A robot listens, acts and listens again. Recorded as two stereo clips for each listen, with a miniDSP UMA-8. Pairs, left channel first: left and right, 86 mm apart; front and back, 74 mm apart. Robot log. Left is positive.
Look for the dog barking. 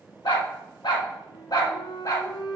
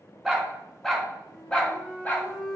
note: The dog barking: 60° left.
cmd yaw +60
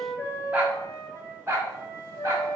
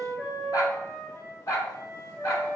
note: The dog barking is now 40° right.
cmd yaw -40
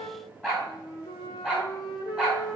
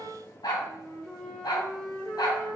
end: Facing the dog barking.